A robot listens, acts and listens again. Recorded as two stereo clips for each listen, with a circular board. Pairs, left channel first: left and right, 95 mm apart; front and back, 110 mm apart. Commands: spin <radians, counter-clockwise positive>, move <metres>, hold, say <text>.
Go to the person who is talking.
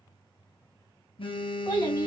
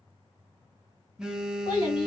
spin 0.79
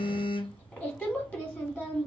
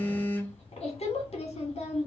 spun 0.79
spin 0.26
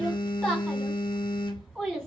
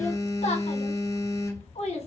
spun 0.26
move 1.0
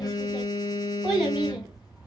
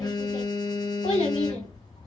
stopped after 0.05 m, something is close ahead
spin -0.17
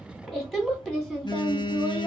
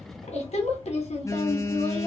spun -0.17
say Something is in my way. I am facing the child speaking but have not reached it.